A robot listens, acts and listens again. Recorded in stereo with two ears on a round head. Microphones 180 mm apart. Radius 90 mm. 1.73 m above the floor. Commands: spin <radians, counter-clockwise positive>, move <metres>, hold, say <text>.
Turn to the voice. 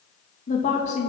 spin 0.61
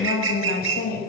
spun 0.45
spin 0.87
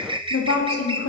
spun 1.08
spin 1.31
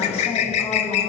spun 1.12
spin 0.26
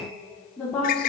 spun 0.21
say Found it: a woman speaking, straight ahead.